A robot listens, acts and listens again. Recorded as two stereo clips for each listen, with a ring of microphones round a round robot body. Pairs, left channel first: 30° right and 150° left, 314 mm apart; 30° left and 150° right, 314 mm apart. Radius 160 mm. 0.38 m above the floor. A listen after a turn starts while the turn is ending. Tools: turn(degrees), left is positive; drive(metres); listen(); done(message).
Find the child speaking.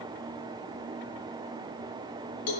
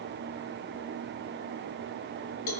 listen()
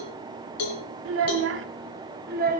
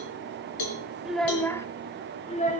turn(degrees=90)
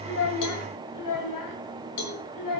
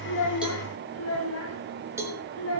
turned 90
turn(degrees=-15)
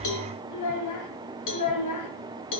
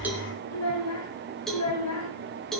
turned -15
done("Facing the child speaking.")